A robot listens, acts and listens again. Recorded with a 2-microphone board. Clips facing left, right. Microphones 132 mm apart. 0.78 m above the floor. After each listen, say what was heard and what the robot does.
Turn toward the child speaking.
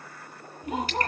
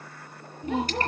The child speaking: about 30° right or 150° right. Turn 30° right.
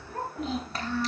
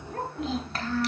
Found it: a child speaking, straight ahead.